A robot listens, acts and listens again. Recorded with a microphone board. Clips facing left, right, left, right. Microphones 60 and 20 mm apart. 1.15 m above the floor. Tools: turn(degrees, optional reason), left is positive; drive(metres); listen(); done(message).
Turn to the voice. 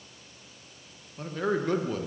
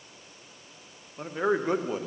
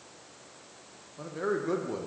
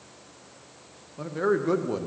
turn(degrees=-20, reason="The man speaking: about 20° right or 160° right.")
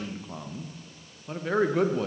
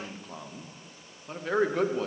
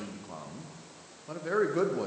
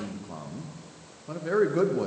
done("Facing the man speaking.")